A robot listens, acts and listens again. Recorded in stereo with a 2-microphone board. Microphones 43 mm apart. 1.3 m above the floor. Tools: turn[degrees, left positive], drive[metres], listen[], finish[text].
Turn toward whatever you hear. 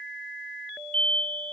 Thought: The explosion: about 30° left or 150° left.
Action: turn[30]
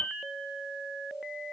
Thought: So it is at 115° left.
Action: turn[115]
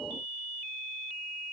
Action: finish[I heard an explosion from this way, but can't make it out now.]